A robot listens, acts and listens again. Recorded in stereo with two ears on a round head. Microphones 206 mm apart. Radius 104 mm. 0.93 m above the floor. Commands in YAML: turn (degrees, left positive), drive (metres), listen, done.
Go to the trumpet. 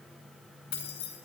listen: true
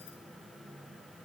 listen: true
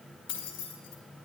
done: "I can't make out a trumpet, only keys jangling."